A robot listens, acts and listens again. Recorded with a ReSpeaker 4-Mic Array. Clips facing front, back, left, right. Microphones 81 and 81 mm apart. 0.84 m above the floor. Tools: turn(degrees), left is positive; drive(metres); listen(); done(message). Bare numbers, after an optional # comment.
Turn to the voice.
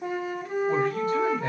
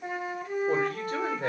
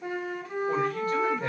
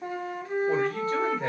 # The man speaking: 150° right.
turn(-150)
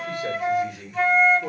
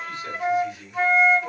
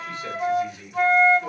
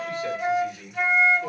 done("Facing the man speaking, 1 to 2 m away.")